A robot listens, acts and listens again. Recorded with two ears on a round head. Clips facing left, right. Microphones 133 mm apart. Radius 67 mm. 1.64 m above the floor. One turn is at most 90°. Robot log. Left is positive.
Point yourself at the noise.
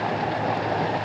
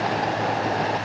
cmd idle
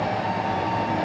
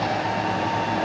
cmd idle
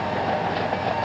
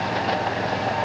end: I can't make out anything to turn to.